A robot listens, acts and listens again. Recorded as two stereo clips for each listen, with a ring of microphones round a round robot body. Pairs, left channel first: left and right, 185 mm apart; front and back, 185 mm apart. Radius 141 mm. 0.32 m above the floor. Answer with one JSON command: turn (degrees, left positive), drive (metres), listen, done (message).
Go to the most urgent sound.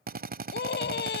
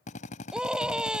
{"turn": 95}
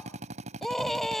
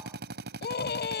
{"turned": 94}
{"drive": 1.0}
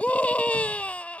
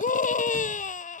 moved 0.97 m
{"turn": 10}
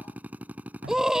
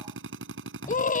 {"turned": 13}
{"drive": 1.0}
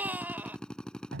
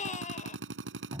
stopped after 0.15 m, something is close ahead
{"turn": -15}
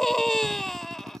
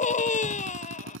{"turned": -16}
{"done": "Arrived at the scream, straight ahead."}